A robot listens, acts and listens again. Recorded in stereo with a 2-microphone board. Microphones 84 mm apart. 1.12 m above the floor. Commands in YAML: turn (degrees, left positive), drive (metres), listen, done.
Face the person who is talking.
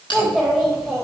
turn: 30
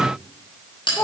turn: 145
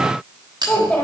turn: 10
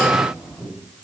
done: "Found it: a child speaking, straight ahead."